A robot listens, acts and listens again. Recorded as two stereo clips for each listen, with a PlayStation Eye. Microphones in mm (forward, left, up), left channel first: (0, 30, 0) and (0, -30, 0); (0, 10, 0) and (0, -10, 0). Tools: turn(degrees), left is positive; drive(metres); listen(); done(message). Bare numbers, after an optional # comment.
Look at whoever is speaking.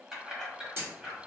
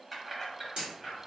listen()
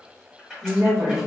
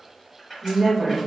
# The woman speaking: about 60° right or 120° right.
turn(-60)
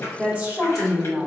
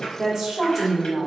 # So it is at 30° right.
turn(-30)
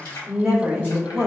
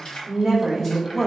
done("Facing the woman speaking, 1 to 2 m away.")